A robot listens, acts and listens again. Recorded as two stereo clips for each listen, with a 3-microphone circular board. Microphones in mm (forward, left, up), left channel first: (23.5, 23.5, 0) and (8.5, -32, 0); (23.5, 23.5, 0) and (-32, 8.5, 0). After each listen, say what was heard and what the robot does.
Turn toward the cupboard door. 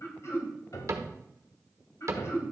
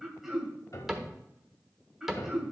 The cupboard door: 80° right. Turn 80° right.
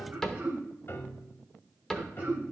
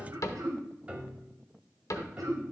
Facing the cupboard door.